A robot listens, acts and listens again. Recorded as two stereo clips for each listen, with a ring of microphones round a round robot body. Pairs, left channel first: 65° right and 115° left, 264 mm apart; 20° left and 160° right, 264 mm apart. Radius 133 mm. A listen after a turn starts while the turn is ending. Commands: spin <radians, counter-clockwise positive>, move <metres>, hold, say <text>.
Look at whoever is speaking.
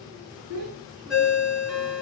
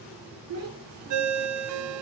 spin 2.53
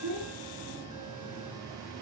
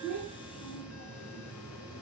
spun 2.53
hold
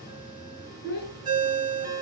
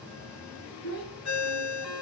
spin -0.26
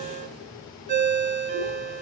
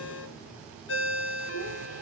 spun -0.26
hold
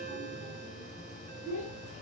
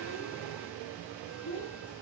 say Found it: a child speaking, straight ahead.